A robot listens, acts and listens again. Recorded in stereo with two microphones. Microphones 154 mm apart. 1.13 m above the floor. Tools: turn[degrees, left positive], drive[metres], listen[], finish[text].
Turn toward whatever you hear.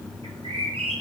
Thought: The bird: about 35° right or 145° right.
Action: turn[-35]
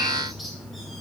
Action: listen[]
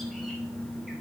Action: listen[]
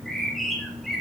Action: finish[Found it: a bird, straight ahead.]